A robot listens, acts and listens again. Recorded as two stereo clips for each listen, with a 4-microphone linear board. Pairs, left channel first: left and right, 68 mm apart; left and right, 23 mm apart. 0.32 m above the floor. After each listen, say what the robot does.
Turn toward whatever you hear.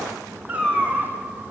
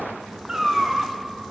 Turn 15° right.
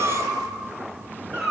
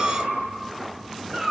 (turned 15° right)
Turn 30° right.
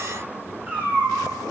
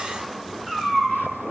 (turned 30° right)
Turn 20° right.
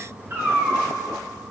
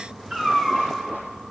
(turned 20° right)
Turn 145° right.
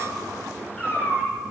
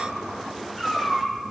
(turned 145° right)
Turn 15° left.
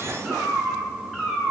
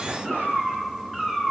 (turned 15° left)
Facing the cat meowing.